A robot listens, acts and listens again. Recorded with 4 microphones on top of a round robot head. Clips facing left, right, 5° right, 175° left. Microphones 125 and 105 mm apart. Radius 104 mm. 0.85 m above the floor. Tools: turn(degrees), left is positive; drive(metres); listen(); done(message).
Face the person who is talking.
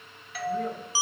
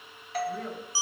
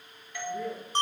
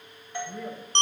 turn(degrees=175)
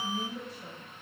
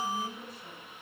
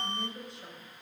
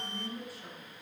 turn(degrees=60)
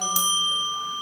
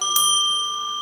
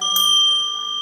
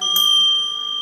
listen()
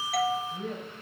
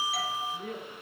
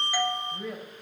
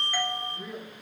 turn(degrees=20)
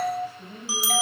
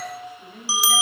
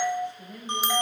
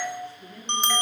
done("Found it: a woman speaking, straight ahead, over 4 m away.")